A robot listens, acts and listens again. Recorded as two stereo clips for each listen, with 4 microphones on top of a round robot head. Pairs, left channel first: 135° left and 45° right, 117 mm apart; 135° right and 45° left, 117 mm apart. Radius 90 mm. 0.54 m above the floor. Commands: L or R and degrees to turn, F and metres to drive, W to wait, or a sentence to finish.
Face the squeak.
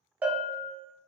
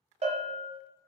W
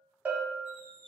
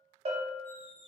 R125
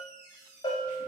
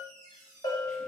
L20
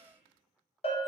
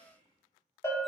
Facing the squeak, 1 to 2 m away.